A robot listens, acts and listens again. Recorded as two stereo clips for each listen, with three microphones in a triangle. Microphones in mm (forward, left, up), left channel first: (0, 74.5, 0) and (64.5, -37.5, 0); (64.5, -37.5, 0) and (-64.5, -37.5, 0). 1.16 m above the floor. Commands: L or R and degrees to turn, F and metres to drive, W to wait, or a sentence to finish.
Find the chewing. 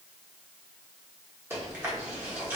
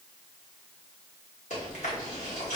L10
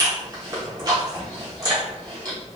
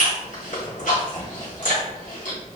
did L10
Found it: chewing, straight ahead.